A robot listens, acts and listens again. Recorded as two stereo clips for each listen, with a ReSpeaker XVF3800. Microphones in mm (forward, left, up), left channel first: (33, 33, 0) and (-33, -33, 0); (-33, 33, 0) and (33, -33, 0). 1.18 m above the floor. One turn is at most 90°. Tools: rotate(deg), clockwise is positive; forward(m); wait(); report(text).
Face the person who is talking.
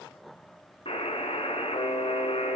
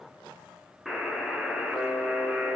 wait()
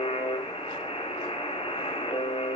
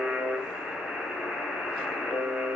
wait()
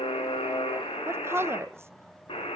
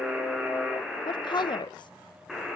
rotate(-90)
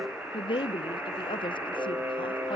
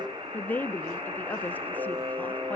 rotate(-65)
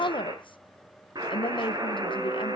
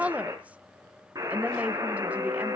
rotate(-30)
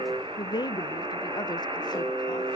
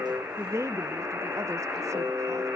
rotate(-10)
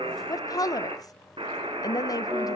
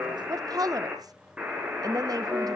report("Found it: a woman speaking, straight ahead.")